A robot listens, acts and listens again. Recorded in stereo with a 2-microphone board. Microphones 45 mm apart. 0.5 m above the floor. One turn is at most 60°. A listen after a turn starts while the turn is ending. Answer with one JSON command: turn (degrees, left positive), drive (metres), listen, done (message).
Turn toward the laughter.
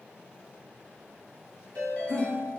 {"turn": 55}
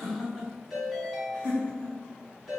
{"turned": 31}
{"turn": 25}
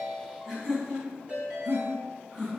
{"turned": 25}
{"done": "Found it: laughter, straight ahead."}